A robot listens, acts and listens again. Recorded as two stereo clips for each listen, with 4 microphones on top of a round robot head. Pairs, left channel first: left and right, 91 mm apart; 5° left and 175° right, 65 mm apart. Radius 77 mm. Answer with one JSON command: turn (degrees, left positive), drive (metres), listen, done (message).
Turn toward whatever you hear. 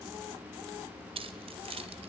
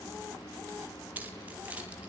{"turn": -105}
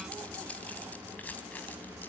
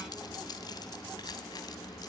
{"turn": 15}
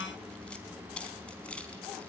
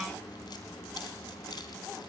{"turn": 10}
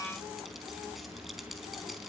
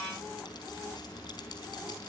{"listen": true}
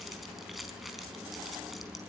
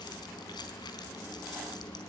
{"done": "Found it: keys jangling, straight ahead, over 4 m away."}